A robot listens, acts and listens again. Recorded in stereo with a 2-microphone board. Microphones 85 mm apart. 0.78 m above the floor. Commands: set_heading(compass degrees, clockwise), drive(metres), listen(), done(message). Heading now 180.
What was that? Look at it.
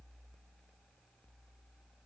listen()
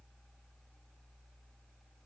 listen()
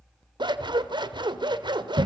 set_heading(245)
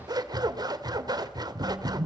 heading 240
set_heading(290)
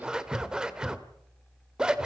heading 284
set_heading(294)
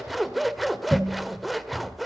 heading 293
done("Found it: scissors, straight ahead.")